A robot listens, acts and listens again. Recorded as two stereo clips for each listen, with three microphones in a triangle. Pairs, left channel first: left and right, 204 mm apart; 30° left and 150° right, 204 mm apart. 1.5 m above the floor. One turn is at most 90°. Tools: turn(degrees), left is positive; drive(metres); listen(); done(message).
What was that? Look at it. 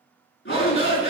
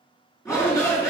turn(degrees=90)
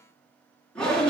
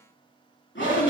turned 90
done("Facing the shout.")